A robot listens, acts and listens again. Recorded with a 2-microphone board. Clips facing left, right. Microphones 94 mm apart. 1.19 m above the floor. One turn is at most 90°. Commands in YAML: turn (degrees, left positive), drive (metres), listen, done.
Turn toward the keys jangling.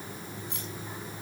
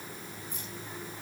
turn: 75
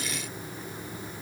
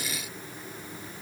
listen: true
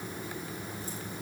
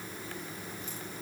listen: true
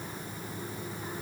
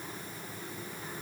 done: "I heard keys jangling, but can't make it out now. It was about straight ahead or 30° left."